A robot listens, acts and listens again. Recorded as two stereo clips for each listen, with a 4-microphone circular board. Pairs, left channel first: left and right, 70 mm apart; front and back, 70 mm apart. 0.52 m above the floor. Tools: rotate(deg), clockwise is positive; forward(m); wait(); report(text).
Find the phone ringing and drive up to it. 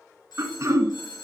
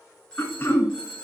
rotate(-80)
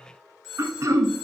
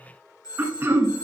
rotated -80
forward(1.0)
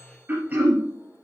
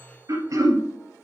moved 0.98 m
wait()
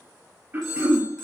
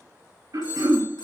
forward(1.0)
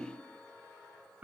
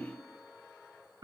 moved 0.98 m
wait()
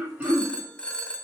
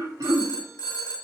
rotate(-15)
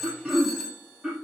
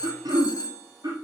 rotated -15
forward(1.0)
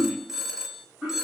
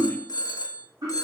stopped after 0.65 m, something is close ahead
report("Arrived at the phone ringing, straight ahead.")